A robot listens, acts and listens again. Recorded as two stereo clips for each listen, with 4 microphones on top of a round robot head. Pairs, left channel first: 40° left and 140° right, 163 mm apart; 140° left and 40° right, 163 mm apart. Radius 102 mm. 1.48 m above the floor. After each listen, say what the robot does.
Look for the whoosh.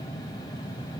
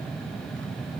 Keep listening.
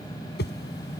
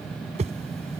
Turn 15° left.
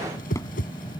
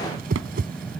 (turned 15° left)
Found it: a whoosh, straight ahead.